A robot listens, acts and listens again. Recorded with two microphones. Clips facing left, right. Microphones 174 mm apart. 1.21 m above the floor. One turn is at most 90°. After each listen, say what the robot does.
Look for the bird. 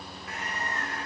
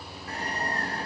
Turn 35° right.
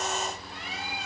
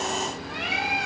Turn 90° right.
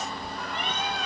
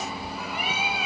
Facing the bird.